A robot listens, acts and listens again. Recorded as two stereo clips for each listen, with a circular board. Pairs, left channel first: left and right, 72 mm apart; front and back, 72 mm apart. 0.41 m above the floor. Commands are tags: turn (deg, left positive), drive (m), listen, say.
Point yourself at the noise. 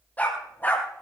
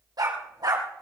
<turn deg="155"/>
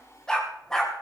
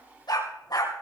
<say>Facing the dog barking.</say>